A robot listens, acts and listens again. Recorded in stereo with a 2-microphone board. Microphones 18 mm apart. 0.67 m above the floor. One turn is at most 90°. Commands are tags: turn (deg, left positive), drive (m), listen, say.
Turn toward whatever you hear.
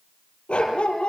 <turn deg="65"/>
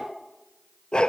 <turn deg="50"/>
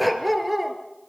<say>Found it: a dog barking, straight ahead.</say>